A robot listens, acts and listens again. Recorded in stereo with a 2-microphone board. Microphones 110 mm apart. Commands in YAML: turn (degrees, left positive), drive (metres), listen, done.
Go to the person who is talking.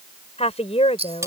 turn: 75
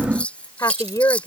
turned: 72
turn: 30
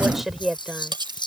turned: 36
drive: 1.0
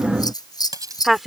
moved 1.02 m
drive: 1.0
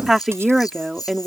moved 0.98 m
drive: 1.0
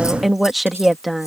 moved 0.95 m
drive: 1.0
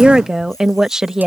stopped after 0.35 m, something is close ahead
done: "I am next to the woman speaking."